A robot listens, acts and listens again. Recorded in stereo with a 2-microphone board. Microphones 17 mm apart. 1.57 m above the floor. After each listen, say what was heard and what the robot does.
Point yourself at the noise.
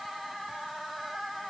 Keep listening.
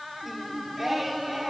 Turn 30° right.
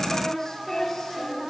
So it is at 40° left. Turn 40° left.
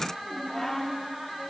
The singing is now 20° left. Turn 20° left.
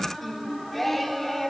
The singing is now 10° left. Turn 10° left.
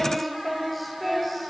Facing the singing.